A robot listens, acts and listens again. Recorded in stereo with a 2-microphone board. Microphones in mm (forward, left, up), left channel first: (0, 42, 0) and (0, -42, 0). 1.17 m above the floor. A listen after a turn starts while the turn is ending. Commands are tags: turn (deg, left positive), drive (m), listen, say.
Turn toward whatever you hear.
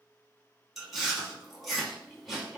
<turn deg="30"/>
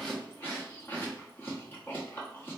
<turn deg="150"/>
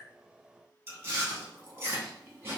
<turn deg="-30"/>
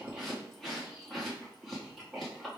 <say>Facing the chewing, 1 to 2 m away.</say>